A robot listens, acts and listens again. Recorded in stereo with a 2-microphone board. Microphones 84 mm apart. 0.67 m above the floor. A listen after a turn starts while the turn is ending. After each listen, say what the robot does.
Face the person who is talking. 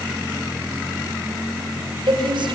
Turn 75° right.
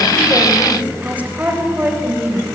Turn 20° right.
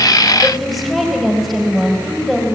Facing the woman speaking.